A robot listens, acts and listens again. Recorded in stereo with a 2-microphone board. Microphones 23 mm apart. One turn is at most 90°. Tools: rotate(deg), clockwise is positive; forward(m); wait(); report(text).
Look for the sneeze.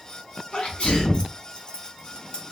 rotate(-65)
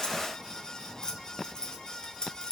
wait()
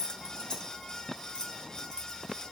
report("I heard a sneeze, but can't make it out now. It was about straight ahead or 50° left.")